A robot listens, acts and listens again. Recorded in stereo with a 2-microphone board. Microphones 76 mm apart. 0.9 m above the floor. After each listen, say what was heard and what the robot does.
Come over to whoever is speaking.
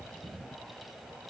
Keep listening.
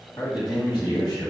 The man speaking: about 65° left or 115° left. Turn 65° left.
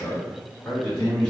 So it is at 10° left. Turn 10° left.
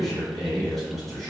Drive 1.0 m forward.
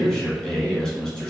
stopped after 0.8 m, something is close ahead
I am next to the man speaking.